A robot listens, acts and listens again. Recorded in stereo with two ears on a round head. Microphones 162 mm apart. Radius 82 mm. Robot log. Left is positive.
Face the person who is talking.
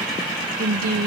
note: The woman speaking: about 55° right or 125° right.
cmd yaw -55
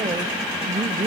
note: So it is at 25° right.
cmd yaw -25
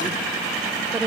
note: The woman speaking is now 10° right.
cmd yaw -10
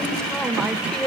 end: Facing the woman speaking, 1 to 2 m away.